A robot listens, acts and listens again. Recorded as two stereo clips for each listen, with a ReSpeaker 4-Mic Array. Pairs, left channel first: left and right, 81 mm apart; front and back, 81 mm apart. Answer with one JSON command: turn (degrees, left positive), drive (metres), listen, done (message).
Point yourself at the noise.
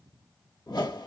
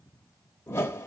{"turn": 60}
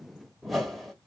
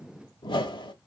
{"done": "Facing the whoosh."}